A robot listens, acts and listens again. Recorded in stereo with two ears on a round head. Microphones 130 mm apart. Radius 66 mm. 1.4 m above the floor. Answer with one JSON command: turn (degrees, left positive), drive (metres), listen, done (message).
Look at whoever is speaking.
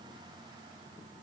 {"listen": true}
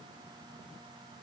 {"listen": true}
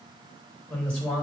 {"turn": 30}
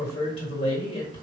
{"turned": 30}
{"turn": 140}
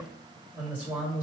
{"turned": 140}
{"turn": -10}
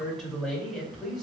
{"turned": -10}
{"done": "Found it: a man speaking, straight ahead."}